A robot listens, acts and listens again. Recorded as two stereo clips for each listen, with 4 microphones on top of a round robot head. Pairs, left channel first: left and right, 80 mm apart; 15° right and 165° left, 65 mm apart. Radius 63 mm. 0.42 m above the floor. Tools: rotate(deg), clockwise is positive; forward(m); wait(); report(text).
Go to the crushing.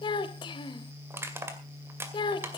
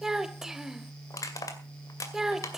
rotate(35)
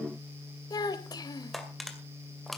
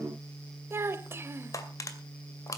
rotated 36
forward(1.0)
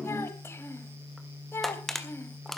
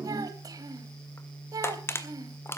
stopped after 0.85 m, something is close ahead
report("Arrived at the crushing, straight ahead.")